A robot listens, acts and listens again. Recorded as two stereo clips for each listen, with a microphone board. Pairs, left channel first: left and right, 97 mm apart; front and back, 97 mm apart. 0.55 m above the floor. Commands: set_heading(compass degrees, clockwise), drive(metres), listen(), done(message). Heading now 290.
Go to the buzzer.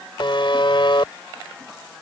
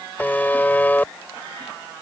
set_heading(220)
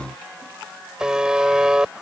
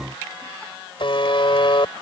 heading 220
set_heading(230)
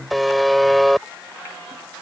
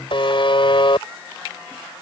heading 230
drive(1.0)
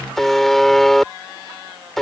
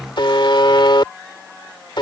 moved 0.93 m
drive(1.0)
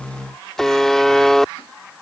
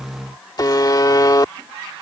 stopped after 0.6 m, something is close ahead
done("I am next to the buzzer.")